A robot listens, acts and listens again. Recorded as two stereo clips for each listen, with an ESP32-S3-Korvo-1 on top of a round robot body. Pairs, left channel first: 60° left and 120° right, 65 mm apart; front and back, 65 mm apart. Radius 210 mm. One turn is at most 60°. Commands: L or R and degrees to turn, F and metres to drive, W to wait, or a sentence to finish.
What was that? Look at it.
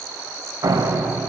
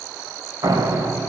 R60
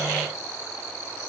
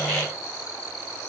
R60
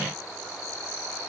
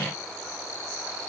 R30
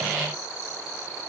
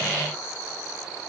Facing where the door slam came from. I can't hear it now.